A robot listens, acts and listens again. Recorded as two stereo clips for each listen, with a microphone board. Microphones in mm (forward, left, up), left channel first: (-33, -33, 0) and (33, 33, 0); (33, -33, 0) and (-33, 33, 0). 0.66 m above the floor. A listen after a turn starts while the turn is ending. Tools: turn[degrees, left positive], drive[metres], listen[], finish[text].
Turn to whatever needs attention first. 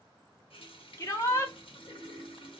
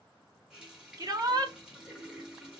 Thought: The shout: 175° left.
Action: turn[175]
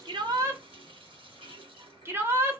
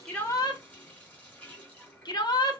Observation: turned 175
Thought: The shout is now 15° right.
Action: turn[-15]
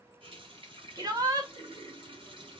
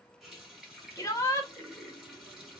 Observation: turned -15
Action: finish[Facing the shout.]